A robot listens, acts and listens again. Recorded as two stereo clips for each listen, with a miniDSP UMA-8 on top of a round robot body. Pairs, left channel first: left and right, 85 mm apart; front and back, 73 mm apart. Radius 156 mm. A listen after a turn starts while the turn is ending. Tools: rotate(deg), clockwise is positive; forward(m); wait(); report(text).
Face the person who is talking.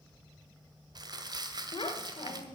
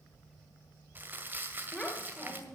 rotate(-85)
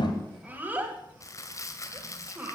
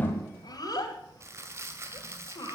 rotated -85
rotate(20)
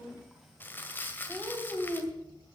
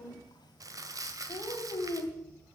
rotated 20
report("Facing the child speaking.")